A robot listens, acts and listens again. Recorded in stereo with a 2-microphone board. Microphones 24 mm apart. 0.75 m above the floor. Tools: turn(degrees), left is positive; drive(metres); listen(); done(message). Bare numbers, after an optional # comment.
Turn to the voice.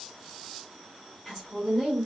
# The woman speaking: about 15° left or 165° left.
turn(15)
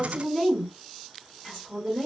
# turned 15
# So it is at 150° left.
turn(150)
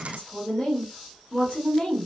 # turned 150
# The woman speaking is now 40° left.
turn(40)
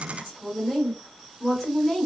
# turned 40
# The woman speaking is now 10° left.
turn(10)
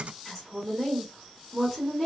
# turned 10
done("Found it: a woman speaking, straight ahead, 1 to 2 m away.")